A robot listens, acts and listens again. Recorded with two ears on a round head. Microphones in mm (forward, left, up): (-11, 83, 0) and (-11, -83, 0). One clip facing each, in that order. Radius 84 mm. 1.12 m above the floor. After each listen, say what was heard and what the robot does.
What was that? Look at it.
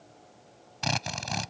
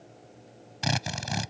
Turn 30° right.
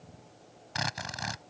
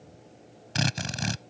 So it is at 140° right. Turn 140° right.
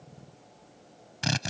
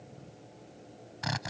The drill is now 35° left. Turn 35° left.
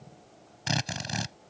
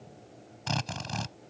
The drill is now 15° left. Turn 15° left.
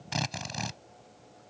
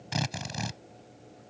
Facing the drill.